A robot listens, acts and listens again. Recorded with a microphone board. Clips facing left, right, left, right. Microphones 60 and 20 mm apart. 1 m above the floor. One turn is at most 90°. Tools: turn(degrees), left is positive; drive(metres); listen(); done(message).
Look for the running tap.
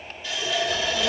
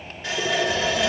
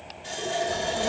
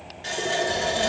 turn(degrees=-60)
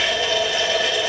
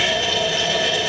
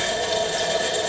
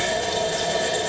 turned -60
done("Found it: a running tap, straight ahead.")